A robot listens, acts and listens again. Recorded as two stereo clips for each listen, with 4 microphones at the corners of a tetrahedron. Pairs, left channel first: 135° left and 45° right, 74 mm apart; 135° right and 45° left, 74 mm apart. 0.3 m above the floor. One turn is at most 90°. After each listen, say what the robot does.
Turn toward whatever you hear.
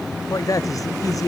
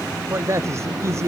Turn 90° left.
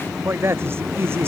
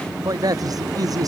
Turn 10° left.
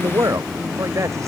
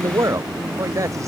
Found it: a man speaking, straight ahead.